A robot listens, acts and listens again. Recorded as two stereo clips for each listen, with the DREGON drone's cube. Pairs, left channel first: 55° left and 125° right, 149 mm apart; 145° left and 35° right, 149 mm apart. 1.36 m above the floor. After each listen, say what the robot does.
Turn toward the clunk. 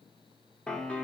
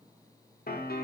Keep listening.
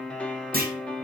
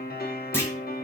Turn 140° right.
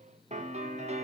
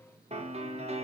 Facing where the clunk came from. I can't hear it now.